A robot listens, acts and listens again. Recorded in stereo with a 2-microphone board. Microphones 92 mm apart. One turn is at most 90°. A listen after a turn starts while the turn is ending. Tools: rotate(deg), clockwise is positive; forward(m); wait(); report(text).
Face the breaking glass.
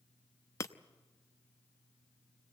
rotate(-30)
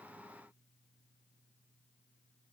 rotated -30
wait()
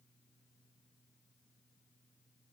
report("I heard breaking glass, but can't make it out now. It was about straight ahead or 120° left.")